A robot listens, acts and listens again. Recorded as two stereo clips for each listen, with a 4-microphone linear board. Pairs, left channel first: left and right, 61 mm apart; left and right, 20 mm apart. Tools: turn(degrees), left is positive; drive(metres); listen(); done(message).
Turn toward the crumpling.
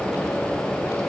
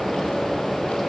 listen()
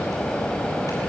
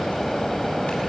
listen()
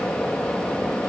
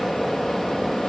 done("I can't make out crumpling to turn to.")